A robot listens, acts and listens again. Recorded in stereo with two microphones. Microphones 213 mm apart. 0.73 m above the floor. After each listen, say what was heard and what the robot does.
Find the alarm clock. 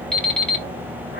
Turn 30° left.
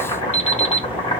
So it is at 150° left. Turn 150° left.
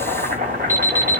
The alarm clock is now 15° right. Turn 15° right.
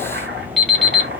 Facing the alarm clock.